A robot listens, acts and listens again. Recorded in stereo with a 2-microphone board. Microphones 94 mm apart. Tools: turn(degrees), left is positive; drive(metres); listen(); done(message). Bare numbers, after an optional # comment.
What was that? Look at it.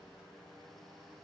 listen()
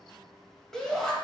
turn(30)
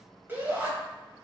# So it is at 25° right.
turn(-25)
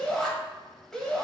# The shout is now 10° left.
turn(10)
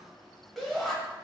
done("Found it: a shout, straight ahead.")